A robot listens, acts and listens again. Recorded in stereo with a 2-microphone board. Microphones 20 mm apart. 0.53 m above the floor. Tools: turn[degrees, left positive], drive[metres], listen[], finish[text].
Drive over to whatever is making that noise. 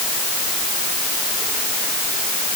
Action: listen[]
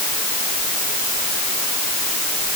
Action: listen[]
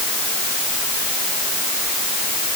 Action: finish[I can't make out anything to turn to.]